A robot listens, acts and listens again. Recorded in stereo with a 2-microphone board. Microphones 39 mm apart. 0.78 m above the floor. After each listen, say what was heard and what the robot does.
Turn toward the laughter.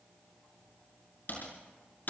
Keep listening.
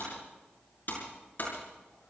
Keep listening.
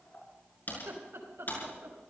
Turn 90° right.
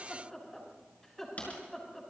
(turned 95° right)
So it is at 10° left. Turn 10° left.
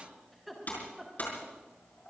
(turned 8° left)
Facing the laughter, over 4 m away.